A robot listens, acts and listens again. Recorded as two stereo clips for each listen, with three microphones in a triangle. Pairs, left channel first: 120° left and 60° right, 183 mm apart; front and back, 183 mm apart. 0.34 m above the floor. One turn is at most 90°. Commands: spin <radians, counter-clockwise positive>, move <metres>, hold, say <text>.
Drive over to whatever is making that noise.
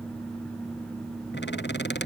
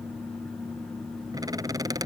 spin 1.57
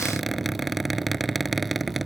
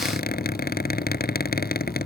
spin 0.52
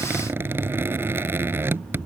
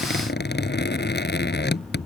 spin 0.35
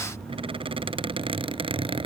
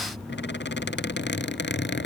move 1.0
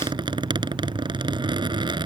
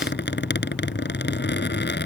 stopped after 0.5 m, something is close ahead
say Blocked. The squeak is further on, straight ahead.